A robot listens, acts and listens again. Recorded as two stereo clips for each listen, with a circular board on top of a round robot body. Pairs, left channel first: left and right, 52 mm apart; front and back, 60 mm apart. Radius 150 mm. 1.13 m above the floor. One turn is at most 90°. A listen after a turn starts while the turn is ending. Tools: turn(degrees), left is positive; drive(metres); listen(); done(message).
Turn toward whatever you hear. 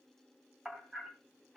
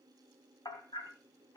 turn(degrees=-10)
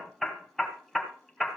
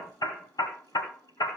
done("Facing the hammering, 1 to 2 m away.")